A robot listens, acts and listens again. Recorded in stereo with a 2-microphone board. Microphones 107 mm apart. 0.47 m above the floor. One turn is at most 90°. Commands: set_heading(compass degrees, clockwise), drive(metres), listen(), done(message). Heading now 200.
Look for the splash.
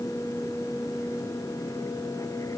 listen()
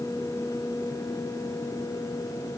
listen()
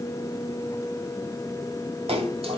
set_heading(270)
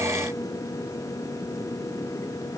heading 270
listen()
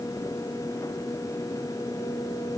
done("I heard a splash, but can't make it out now. It was about straight ahead or 40° right.")